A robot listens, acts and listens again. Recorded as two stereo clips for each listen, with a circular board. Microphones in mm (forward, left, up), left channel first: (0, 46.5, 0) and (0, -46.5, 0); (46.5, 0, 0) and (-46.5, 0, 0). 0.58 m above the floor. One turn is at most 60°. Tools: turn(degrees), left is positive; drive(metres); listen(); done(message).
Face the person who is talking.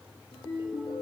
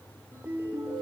listen()
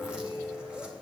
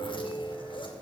listen()
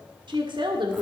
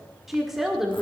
turn(degrees=-60)
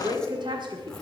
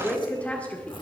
turn(degrees=-60)
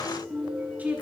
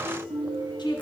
turn(degrees=-20)
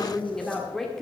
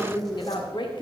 done("Facing the woman speaking, 1 to 2 m away.")